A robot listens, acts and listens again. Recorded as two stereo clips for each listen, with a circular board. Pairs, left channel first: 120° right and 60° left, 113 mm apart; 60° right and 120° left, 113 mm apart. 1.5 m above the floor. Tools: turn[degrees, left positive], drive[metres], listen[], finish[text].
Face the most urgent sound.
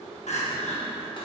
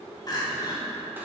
Thought: The crying: 115° right.
Action: turn[-115]
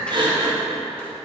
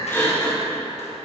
Thought: The crying is now 10° left.
Action: turn[10]
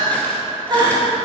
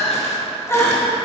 Thought: The crying is now 10° left.
Action: turn[10]
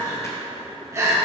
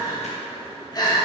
Action: finish[Found it: crying, straight ahead, 1 to 2 m away.]